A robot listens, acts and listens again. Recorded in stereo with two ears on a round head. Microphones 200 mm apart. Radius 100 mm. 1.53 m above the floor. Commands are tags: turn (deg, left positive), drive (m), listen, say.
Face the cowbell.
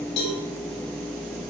<turn deg="90"/>
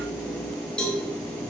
<say>Found it: a cowbell, straight ahead, 2 to 4 m away.</say>